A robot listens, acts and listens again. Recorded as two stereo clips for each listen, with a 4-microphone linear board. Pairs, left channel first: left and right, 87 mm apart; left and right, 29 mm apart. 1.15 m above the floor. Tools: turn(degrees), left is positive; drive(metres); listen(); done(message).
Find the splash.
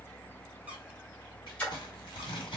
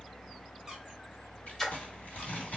turn(degrees=30)
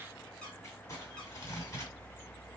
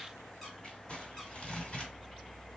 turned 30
listen()
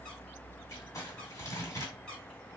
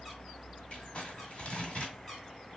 done("I heard a splash, but can't make it out now. It was about 15° right or 135° left.")